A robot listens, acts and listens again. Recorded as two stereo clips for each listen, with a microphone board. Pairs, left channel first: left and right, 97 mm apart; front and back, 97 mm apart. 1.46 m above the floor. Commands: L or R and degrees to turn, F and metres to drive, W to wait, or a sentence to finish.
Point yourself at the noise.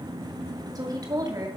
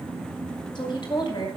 R40
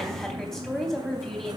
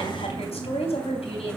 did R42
Found it: a woman speaking, straight ahead.